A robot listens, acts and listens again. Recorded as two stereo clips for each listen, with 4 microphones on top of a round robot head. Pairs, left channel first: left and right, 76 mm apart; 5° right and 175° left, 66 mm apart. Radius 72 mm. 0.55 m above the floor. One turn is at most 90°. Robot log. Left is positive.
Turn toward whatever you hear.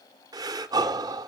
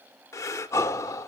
note: The breathing: 50° right.
cmd yaw -50
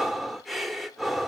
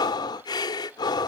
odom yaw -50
end: Facing the breathing, under 1 m away.